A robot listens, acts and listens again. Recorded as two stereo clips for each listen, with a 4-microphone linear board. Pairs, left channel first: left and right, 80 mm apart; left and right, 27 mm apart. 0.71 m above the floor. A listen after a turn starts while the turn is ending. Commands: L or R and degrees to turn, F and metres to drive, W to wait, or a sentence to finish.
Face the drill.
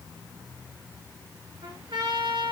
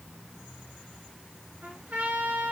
W
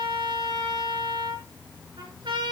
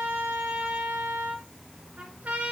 W
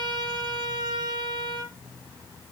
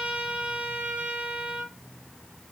I can't make out a drill to turn to.